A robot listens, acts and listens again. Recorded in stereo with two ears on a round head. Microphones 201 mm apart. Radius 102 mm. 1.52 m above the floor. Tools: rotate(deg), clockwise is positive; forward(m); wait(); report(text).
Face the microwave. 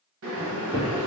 rotate(30)
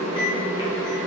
rotate(-20)
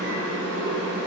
wait()
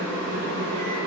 wait()
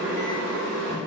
report("I heard a microwave from this way, but can't make it out now.")